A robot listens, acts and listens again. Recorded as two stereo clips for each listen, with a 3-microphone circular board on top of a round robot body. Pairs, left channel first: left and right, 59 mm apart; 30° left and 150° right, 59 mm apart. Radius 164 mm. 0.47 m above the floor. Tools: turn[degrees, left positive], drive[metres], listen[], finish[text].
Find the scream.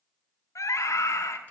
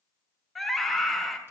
Thought: The scream: 115° left.
Action: turn[115]
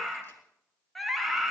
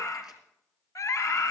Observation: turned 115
Action: finish[Found it: a scream, straight ahead.]